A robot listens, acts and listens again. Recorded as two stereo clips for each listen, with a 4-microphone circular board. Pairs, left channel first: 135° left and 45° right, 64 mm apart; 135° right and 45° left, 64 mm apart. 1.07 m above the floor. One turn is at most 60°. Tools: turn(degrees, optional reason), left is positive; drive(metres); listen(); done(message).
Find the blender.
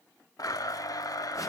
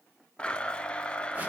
turn(degrees=60, reason="The blender: 150° left.")
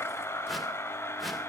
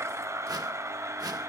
turn(degrees=60, reason="The blender is now 85° left.")
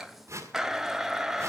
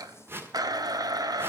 turn(degrees=35, reason="The blender is now 35° left.")
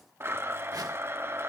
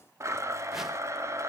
done("Facing the blender, under 1 m away.")